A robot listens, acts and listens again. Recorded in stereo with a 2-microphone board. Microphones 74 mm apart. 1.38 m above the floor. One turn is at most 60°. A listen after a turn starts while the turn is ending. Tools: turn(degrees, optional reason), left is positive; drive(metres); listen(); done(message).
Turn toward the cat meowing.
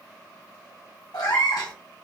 turn(degrees=60, reason="The cat meowing: about 60° left or 120° left.")
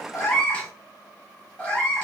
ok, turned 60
turn(degrees=20, reason="So it is at 20° left.")
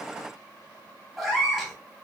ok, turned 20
done("Found it: a cat meowing, straight ahead.")